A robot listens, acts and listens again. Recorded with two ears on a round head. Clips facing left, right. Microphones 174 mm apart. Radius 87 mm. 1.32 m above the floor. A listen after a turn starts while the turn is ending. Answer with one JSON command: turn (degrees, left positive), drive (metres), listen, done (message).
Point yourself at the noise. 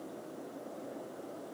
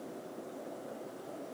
{"listen": true}
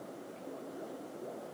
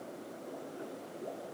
{"listen": true}
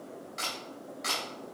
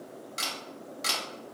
{"turn": -40}
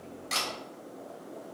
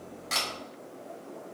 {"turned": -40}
{"done": "Found it: a camera shutter, straight ahead, 1 to 2 m away."}